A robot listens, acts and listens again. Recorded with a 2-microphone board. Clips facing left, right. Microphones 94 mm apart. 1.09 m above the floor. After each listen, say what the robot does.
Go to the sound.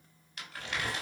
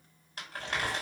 Turn 40° right.
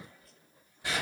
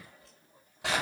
Turn 100° right.
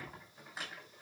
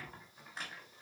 Drive 1.0 m forward.
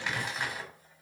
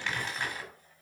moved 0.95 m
Turn 10° left.
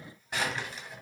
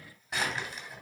Drive 1.0 m forward.
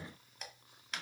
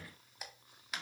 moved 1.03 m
Drive 1.0 m forward.
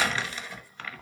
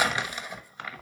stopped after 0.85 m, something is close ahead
Turn 15° right.
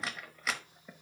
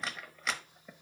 I am next to the crumpling.